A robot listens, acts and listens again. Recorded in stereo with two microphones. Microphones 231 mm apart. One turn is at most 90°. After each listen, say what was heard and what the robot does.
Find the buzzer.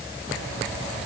Keep listening.
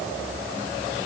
Keep listening.
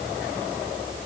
I can't make out a buzzer.